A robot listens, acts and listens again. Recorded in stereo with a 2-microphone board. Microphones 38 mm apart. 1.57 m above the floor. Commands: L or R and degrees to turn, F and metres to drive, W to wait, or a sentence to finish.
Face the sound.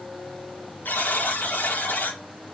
L60
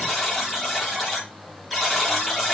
Found it: a buzzer, straight ahead, over 4 m away.